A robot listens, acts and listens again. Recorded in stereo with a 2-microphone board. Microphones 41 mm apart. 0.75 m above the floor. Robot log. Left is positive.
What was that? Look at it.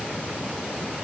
cmd idle
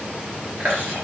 note: The chewing: about 60° right or 120° right.
cmd yaw -60
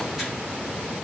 cmd idle
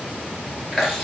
end: Found it: chewing, straight ahead.